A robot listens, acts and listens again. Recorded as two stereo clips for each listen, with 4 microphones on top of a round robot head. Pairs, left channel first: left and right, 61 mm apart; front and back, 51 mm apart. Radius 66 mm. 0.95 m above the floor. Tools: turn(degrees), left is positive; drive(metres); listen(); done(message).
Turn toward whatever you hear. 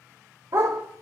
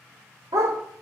turn(degrees=-145)
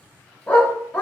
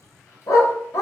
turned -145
turn(degrees=20)
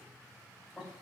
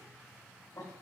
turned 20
listen()
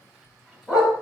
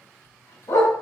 done("Found it: a dog barking, straight ahead, 2 to 4 m away.")